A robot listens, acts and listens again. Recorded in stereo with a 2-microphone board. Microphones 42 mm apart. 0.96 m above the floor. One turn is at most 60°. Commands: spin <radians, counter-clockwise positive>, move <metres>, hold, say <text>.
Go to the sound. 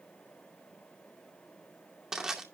spin -0.52
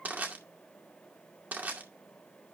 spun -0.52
spin -1.05
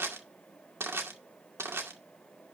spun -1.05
spin -1.05
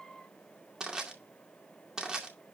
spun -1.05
spin -0.35
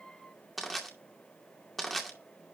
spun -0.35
move 1.0
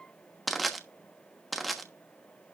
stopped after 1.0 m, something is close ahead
say Arrived at the crushing, straight ahead.